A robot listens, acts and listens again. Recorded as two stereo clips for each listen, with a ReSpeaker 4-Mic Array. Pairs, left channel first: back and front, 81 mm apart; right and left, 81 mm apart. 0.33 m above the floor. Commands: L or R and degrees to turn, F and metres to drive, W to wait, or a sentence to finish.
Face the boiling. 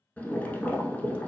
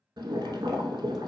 L110
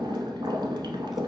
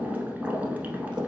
L20
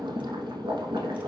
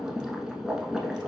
Facing the boiling, under 1 m away.